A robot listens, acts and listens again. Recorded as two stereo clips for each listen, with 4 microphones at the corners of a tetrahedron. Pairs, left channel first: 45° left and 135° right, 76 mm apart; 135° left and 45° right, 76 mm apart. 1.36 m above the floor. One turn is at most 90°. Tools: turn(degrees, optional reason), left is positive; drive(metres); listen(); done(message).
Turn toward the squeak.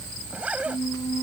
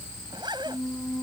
turn(degrees=30, reason="The squeak: 30° left.")
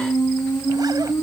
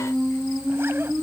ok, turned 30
turn(degrees=-10, reason="The squeak is now 10° right.")
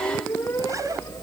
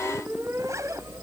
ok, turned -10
done("Facing the squeak.")